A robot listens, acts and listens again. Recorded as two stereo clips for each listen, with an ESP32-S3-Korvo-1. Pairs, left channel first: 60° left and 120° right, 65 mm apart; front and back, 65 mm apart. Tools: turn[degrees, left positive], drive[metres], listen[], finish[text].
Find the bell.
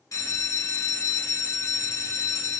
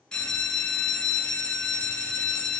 Thought: The bell: 75° left.
Action: turn[75]
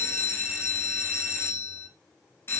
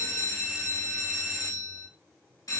Thought: The bell is now 15° left.
Action: turn[15]
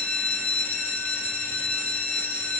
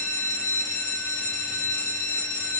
Action: finish[Found it: a bell, straight ahead, 1 to 2 m away.]